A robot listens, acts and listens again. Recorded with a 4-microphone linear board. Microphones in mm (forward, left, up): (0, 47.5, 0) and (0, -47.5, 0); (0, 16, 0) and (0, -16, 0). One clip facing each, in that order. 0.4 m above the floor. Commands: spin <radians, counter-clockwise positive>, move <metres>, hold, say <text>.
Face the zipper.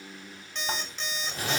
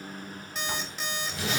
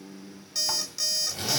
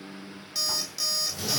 spin 0.70
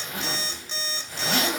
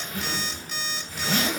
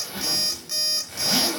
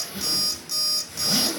spin 1.66
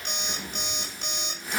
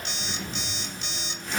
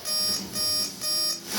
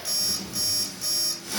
say Facing the zipper, 1 to 2 m away.